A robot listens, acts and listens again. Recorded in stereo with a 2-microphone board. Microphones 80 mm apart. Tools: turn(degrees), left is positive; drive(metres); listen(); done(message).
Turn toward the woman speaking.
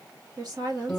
turn(degrees=-60)
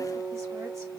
listen()
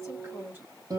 turn(degrees=-30)
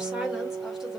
turn(degrees=-10)
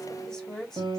turn(degrees=10)
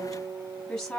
turn(degrees=10)
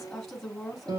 done("Facing the woman speaking.")